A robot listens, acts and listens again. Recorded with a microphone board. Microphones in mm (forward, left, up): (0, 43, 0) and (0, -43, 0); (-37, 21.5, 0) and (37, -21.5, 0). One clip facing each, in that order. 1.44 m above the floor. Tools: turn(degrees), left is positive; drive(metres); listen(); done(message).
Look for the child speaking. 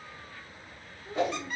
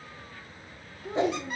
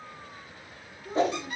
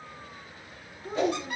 turn(degrees=-85)
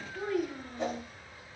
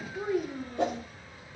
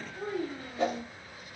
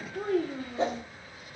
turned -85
turn(degrees=-15)
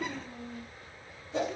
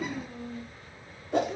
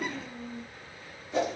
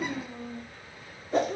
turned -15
done("Facing the child speaking, under 1 m away.")